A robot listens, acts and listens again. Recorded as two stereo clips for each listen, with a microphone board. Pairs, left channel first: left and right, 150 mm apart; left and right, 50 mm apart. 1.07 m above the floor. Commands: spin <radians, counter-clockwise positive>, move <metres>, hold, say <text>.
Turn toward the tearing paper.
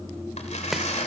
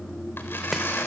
spin 0.87
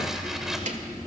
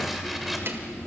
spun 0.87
hold
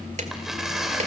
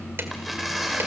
say Found it: tearing paper, straight ahead, 2 to 4 m away.